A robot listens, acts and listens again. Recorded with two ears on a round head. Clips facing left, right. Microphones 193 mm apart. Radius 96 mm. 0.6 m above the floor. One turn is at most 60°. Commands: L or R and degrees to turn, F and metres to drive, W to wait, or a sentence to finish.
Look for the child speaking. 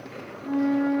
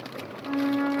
W
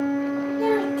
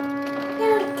R60
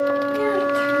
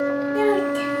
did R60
R50
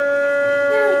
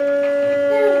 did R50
W
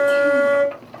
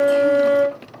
W
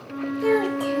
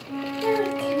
Facing the child speaking.